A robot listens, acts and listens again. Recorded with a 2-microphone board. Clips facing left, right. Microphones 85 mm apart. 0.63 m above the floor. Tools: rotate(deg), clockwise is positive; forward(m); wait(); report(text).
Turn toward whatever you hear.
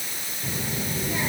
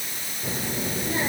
rotate(35)
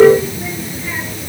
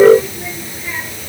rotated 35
report("Facing the child speaking.")